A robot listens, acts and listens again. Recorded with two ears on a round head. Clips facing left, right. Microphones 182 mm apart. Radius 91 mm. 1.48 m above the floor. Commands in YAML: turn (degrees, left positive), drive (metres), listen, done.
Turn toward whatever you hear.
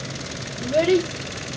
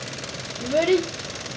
turn: 30
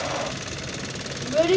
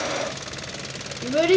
turn: -25
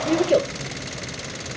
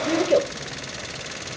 done: "Facing the child speaking."